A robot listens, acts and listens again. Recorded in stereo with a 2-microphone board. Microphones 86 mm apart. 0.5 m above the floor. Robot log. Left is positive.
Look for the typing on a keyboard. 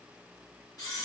cmd idle
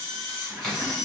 cmd yaw +30
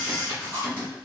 note: So it is at 25° right.
cmd yaw -25
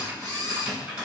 note: The typing on a keyboard is now 10° right.
cmd yaw -10
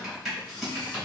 end: Found it: typing on a keyboard, straight ahead.